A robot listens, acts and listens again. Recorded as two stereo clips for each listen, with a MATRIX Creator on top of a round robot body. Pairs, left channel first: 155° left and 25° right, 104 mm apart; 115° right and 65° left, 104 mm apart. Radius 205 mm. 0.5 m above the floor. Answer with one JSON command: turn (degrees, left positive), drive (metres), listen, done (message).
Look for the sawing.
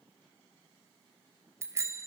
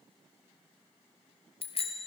{"listen": true}
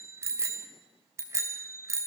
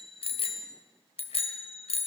{"listen": true}
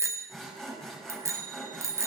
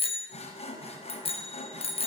{"turn": -115}
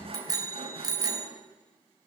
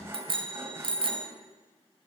{"done": "Facing the sawing."}